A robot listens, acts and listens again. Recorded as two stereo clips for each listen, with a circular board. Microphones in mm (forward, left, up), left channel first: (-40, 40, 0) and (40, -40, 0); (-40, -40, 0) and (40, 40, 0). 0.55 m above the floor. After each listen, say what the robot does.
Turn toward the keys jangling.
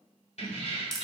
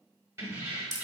Turn 115° left.
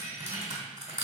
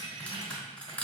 Turn 30° left.
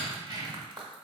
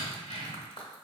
Turn 10° left.
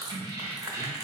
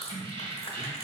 Turn 20° left.
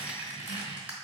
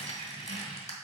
Turn 10° left.
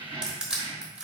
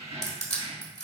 Turn 10° left.
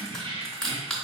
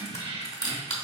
Facing the keys jangling.